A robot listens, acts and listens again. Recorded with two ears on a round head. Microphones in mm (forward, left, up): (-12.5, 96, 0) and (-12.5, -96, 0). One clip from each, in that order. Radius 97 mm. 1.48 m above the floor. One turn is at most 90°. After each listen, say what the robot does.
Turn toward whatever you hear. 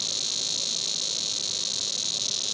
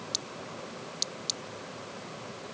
Keep listening.
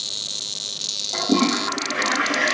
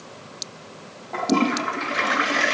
Turn 20° right.
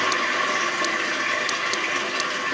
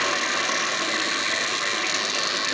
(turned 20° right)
Facing the toilet flushing.